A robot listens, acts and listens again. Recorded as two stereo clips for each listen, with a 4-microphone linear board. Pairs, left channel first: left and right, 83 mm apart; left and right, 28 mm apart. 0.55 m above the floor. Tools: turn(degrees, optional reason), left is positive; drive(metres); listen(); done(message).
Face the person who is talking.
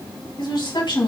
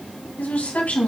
turn(degrees=65, reason="The woman speaking: about 65° left or 115° left.")
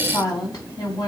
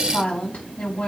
turn(degrees=45, reason="So it is at 45° left.")
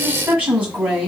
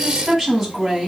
turn(degrees=-15, reason="The woman speaking is now 15° right.")
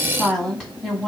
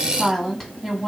done("Found it: a woman speaking, straight ahead.")